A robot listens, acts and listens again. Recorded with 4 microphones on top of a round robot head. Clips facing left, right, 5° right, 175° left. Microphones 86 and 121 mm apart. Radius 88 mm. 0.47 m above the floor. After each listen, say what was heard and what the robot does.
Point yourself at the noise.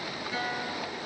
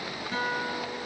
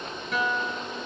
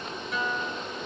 The guitar: 35° right. Turn 35° right.
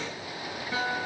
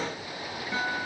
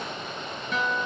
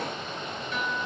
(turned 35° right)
Found it: a guitar, straight ahead.